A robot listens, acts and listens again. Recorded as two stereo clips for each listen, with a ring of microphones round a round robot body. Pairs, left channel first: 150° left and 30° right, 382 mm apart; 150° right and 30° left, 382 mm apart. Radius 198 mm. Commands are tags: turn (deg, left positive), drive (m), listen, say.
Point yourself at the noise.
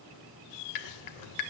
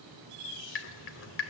<turn deg="150"/>
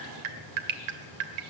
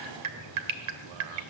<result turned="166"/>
<turn deg="-15"/>
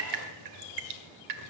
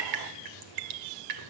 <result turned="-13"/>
<say>Found it: dripping, straight ahead, 1 to 2 m away.</say>